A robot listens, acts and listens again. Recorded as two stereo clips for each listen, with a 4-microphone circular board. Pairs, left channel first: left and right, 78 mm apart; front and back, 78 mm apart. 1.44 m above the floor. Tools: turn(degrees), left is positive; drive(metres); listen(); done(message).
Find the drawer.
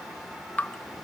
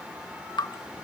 listen()
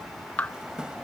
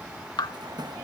turn(degrees=-170)
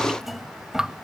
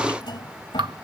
done("Facing the drawer.")